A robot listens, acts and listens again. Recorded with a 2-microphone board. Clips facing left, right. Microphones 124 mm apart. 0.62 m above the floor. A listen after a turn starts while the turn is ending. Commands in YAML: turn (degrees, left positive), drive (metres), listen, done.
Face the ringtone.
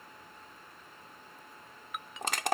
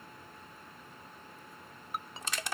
turn: -35
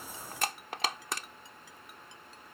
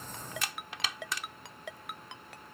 turn: -110
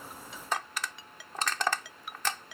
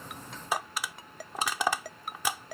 turn: -45
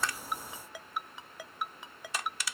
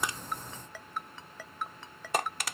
turn: 10
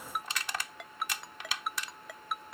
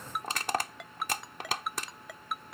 done: "Found it: a ringtone, straight ahead."